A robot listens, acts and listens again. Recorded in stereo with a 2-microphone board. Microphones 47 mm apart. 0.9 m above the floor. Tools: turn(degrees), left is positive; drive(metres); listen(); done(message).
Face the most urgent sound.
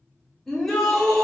turn(degrees=30)
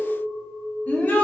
turn(degrees=145)
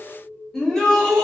turn(degrees=15)
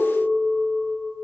listen()
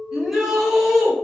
done("Found it: a shout, straight ahead, 1 to 2 m away.")